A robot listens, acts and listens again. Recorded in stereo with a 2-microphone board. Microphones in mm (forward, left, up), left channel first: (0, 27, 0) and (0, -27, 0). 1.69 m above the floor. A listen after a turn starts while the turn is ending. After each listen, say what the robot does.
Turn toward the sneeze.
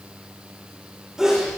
Turn 30° right.
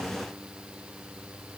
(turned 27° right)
Keep listening.
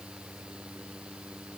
I heard a sneeze, but can't make it out now. It was about 20° left or 145° right.